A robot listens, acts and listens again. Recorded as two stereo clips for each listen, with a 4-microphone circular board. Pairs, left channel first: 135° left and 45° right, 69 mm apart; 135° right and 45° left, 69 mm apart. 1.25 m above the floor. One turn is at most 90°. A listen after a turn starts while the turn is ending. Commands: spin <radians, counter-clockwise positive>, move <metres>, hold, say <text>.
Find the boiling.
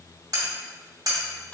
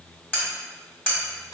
hold
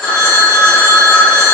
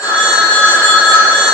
hold
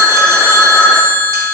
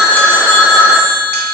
say I can't make out boiling, only cutlery clinking and a phone ringing.